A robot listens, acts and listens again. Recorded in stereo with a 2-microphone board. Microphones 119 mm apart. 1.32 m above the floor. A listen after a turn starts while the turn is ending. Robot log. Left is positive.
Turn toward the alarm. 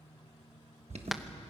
note: The alarm: about 70° right or 110° right.
cmd yaw -70
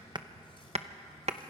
cmd idle
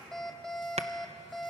end: Found it: an alarm, straight ahead.